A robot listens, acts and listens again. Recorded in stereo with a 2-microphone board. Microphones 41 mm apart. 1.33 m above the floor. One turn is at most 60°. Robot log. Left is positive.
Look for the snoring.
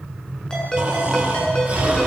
note: The snoring: about 30° right or 150° right.
cmd yaw -30
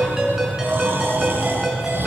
note: So it is at 120° right.
cmd yaw -60
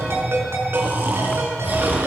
note: The snoring is now 55° right.
cmd yaw -55
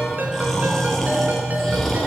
end: Facing the snoring, over 4 m away.